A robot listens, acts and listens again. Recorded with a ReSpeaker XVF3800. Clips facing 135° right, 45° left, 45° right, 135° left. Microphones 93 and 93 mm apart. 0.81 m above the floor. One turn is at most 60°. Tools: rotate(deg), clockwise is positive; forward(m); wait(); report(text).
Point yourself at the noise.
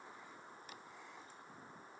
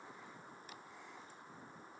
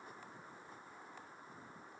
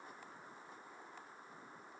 wait()
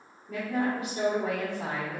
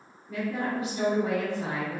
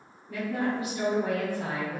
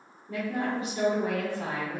rotate(60)
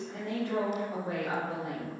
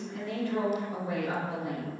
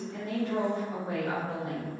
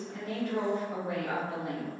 rotate(60)
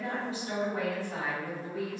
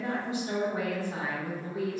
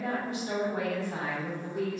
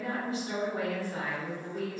rotate(35)
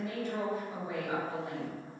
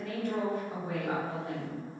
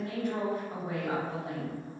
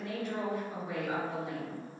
report("Found it: a woman speaking, straight ahead.")